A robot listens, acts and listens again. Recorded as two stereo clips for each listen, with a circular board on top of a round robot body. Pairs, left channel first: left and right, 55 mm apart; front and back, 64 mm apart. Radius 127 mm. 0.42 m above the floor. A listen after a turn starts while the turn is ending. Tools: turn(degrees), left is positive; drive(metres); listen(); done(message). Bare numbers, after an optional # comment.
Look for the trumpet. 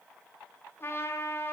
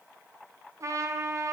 # The trumpet: 140° left.
turn(140)
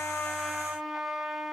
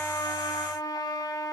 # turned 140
done("Found it: a trumpet, straight ahead.")